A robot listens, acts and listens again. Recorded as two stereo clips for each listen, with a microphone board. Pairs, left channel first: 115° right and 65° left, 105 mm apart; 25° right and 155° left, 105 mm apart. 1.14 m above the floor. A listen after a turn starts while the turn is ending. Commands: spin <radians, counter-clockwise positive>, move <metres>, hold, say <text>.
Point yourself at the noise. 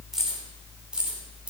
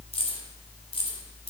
spin -0.26
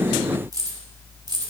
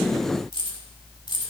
spin 0.35
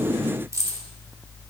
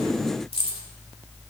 say Facing the keys jangling.